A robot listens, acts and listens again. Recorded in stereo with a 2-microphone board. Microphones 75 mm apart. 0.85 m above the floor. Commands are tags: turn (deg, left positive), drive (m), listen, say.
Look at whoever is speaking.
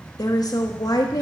<turn deg="55"/>
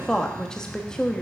<turn deg="10"/>
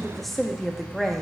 <say>Facing the woman speaking, 1 to 2 m away.</say>